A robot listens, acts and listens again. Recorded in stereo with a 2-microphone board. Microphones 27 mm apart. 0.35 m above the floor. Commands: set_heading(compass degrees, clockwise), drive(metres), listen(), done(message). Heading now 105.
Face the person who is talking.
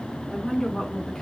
set_heading(80)
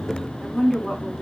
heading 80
set_heading(50)
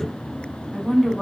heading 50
done("Facing the woman speaking, 2 to 4 m away.")